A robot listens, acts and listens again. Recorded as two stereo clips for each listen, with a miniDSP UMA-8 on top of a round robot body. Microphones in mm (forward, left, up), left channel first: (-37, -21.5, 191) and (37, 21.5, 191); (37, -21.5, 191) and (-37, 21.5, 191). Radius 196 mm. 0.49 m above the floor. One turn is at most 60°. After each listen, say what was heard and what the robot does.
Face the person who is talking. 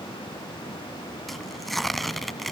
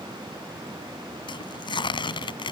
Keep listening.
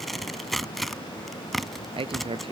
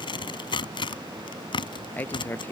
The man speaking: 40° left. Turn 40° left.
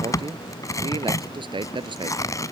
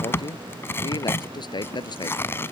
Facing the man speaking.